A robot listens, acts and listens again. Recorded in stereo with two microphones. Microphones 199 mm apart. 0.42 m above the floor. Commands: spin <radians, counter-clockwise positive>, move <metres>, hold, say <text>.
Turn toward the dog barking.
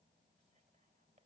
hold
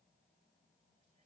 hold
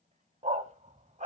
spin -0.61
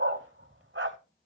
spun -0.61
spin -2.01
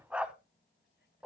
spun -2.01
say Facing the dog barking, under 1 m away.